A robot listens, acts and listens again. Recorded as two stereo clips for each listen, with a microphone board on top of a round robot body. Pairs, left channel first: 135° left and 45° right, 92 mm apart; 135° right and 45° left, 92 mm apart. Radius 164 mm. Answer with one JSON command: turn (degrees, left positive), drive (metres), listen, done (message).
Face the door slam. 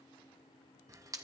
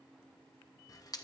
{"listen": true}
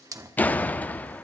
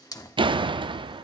{"turn": 65}
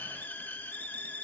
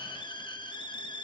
{"done": "Facing where the door slam came from. I can't hear it now."}